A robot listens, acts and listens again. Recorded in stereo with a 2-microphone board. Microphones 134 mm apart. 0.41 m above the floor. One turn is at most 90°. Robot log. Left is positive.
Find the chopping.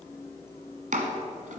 note: The chopping: about 75° right or 105° right.
cmd yaw -75
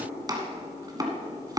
note: So it is at 30° right.
cmd yaw -30
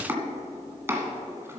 note: The chopping is now 20° right.
cmd yaw -20
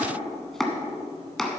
end: Found it: chopping, straight ahead.